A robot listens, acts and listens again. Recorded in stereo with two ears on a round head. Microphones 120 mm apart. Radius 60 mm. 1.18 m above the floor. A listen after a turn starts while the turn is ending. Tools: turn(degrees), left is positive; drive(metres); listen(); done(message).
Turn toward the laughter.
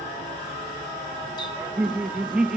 turn(degrees=-30)
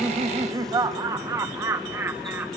turn(degrees=-15)
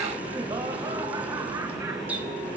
listen()
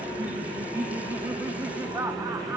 turn(degrees=-160)
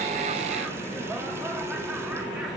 listen()
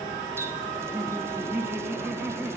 turn(degrees=-10)
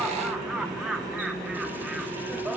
done("Found it: laughter, straight ahead.")